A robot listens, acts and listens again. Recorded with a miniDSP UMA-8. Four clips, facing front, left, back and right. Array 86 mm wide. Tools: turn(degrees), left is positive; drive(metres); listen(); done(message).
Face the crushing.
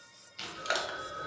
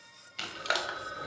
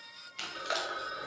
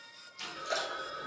turn(degrees=70)
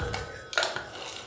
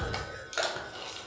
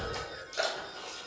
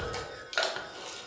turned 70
turn(degrees=-15)
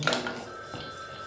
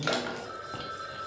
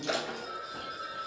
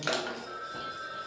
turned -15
done("Facing the crushing.")